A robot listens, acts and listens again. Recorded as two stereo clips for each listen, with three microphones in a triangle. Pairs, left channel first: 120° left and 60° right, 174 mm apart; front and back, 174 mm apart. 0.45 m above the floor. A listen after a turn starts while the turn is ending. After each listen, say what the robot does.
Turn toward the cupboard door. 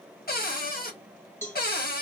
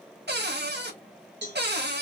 Turn 155° left.
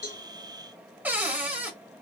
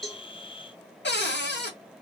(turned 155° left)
Turn 20° left.
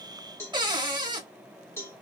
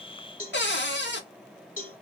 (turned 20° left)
Facing the cupboard door.